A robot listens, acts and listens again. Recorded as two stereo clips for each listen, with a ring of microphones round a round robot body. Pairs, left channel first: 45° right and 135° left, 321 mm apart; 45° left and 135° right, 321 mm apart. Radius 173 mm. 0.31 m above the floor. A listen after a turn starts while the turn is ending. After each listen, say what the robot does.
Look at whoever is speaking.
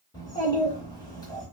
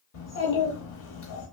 Turn 30° left.
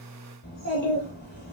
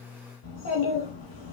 Turn 10° left.
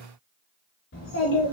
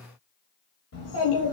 Found it: a child speaking, straight ahead, 1 to 2 m away.